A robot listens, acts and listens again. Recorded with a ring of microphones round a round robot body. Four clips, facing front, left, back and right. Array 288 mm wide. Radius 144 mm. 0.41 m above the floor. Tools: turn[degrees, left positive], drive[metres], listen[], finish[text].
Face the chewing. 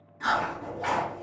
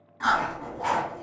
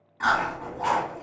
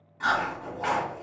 Thought: The chewing: 165° left.
Action: turn[165]
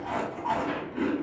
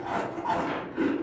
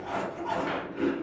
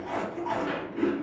Thought: The chewing is now 60° left.
Action: turn[60]
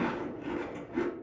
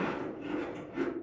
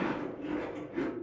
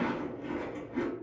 Thought: The chewing is now 10° right.
Action: turn[-10]
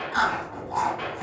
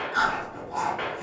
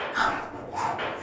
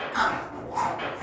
Action: finish[Found it: chewing, straight ahead.]